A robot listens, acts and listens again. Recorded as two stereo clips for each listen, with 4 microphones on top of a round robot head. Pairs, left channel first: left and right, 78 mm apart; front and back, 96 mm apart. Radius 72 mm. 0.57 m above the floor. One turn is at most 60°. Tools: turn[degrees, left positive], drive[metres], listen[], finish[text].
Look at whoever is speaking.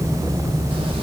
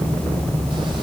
Action: listen[]
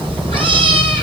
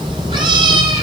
Action: listen[]
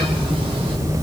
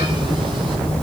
Action: finish[I can't make out anyone speaking to turn to.]